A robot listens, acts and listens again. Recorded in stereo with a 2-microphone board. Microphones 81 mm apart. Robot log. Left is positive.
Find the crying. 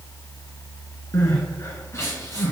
note: The crying: about 40° left or 140° left.
cmd yaw +40
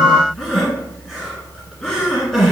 end: Facing the crying, 1 to 2 m away.